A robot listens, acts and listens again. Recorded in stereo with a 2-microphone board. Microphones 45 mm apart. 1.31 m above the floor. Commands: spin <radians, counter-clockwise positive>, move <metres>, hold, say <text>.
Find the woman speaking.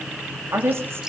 spin -1.22
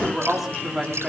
say Facing the woman speaking, 2 to 4 m away.